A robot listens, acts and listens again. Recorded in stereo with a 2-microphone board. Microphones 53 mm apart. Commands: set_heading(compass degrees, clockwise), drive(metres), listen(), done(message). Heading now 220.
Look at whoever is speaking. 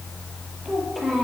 set_heading(190)
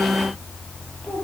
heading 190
listen()
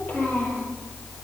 set_heading(40)
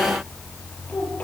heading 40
listen()
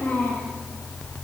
set_heading(15)
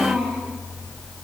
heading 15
done("Facing the child speaking.")